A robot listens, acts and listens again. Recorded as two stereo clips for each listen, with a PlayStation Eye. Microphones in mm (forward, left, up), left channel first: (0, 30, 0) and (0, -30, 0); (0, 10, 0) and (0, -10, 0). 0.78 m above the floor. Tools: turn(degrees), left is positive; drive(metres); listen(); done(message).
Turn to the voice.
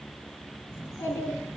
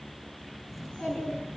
turn(degrees=90)
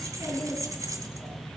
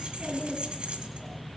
turn(degrees=10)
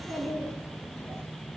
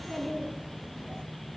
done("Found it: a child speaking, straight ahead.")